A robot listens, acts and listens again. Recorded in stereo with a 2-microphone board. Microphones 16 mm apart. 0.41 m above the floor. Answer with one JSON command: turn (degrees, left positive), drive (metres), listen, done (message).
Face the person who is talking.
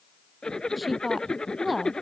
{"turn": -30}
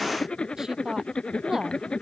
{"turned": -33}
{"turn": -145}
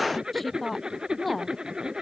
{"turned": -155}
{"turn": 10}
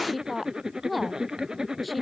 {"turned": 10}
{"done": "Found it: a woman speaking, straight ahead."}